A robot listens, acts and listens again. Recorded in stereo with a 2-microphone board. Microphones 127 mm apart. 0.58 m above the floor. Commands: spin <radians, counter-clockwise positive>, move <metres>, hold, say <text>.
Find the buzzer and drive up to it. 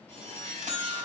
spin -1.22
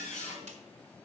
hold
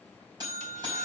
spin -0.61
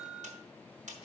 move 1.0
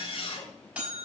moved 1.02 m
spin -0.17
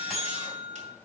move 1.0
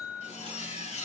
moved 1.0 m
move 1.0
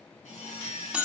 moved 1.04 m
spin -0.17
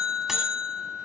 move 1.0
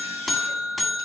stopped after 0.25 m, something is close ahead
say Arrived at the buzzer, straight ahead.